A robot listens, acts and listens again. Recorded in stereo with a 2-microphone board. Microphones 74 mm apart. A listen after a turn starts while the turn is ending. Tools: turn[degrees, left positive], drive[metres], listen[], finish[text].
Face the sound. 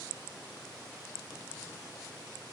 Action: listen[]
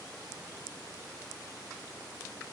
Action: listen[]
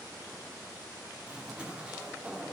Thought: The zipper: about 15° right or 165° right.
Action: turn[-15]
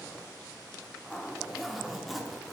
Action: finish[Facing the zipper.]